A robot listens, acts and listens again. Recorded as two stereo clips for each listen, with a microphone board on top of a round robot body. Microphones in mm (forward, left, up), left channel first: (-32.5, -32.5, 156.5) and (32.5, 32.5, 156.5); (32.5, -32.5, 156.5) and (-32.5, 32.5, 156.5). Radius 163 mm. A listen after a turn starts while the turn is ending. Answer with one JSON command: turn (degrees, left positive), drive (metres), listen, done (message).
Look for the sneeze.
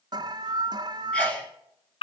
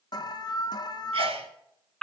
{"turn": 150}
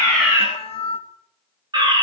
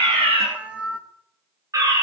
{"done": "I heard a sneeze from this way, but can't make it out now."}